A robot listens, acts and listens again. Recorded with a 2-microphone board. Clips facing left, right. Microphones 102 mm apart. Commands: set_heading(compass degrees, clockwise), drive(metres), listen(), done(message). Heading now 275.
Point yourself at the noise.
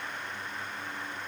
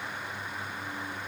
listen()
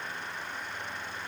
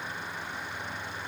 listen()
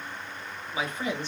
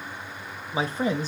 set_heading(315)
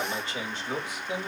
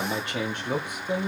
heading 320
set_heading(5)
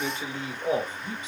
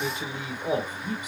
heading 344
set_heading(354)
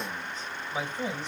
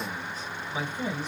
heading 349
done("Facing the man speaking.")